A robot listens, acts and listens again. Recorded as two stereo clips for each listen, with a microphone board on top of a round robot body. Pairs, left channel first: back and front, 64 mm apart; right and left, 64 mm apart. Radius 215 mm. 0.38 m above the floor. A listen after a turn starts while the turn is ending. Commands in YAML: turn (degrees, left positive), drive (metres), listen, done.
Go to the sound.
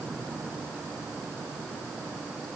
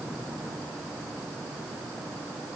listen: true
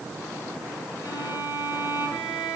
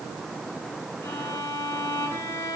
turn: -140
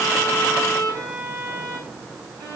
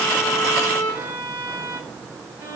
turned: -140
turn: 30
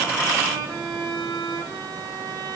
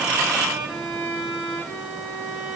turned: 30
drive: 1.0
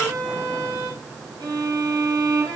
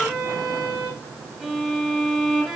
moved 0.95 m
drive: 1.0
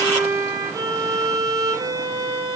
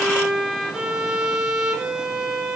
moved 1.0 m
drive: 1.0
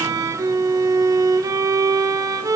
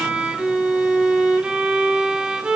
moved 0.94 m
turn: 15
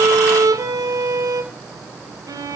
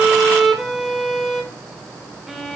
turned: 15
drive: 1.0
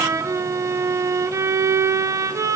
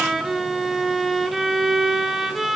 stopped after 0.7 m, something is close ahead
done: "I am next to the violin."